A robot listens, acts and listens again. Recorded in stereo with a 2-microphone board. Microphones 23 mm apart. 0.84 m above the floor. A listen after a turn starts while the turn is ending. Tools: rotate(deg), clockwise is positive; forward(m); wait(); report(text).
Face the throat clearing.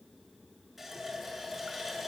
wait()
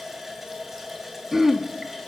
rotate(30)
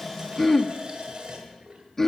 rotate(-15)
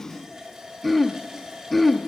report("Facing the throat clearing, under 1 m away.")